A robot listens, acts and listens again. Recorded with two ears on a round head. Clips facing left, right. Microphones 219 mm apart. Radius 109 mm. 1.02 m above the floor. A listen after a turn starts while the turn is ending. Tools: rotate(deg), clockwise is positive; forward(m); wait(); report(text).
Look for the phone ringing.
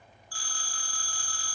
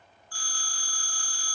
rotate(-30)
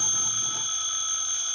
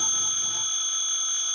rotate(-120)
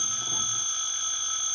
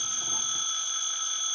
rotate(-20)
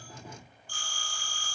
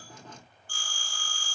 report("Facing the phone ringing, 2 to 4 m away.")